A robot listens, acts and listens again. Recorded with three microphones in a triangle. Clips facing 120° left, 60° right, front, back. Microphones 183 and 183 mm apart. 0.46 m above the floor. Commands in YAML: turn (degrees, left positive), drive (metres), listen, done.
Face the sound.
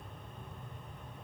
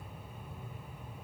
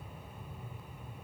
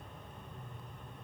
listen: true
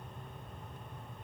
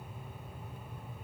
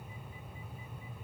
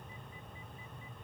listen: true
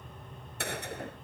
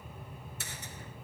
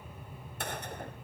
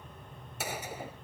turn: 95
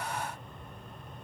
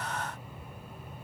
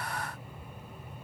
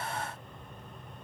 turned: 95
done: "Facing where the gunshot came from. I can't hear it now."